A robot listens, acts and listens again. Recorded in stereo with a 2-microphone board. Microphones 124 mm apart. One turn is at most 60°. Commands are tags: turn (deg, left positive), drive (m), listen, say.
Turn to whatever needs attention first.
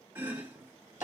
<listen/>
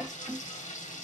<listen/>
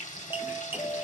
<turn deg="35"/>
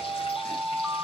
<say>Facing the alarm.</say>